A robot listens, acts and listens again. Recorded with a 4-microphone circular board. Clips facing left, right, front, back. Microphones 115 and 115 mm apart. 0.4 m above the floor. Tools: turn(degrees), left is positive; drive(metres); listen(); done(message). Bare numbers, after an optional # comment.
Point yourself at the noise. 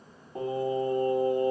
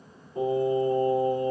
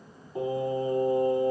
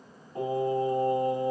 # The singing: 90° left.
turn(90)
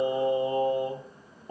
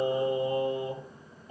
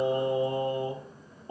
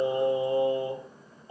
# The singing is now 55° left.
turn(55)
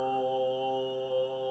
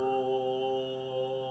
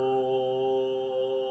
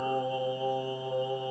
# The singing is now 30° left.
turn(30)
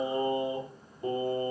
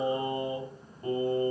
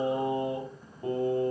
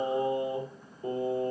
# The singing is now 15° left.
turn(15)
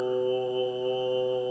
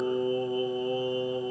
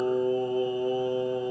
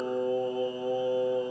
done("Facing the singing, 1 to 2 m away.")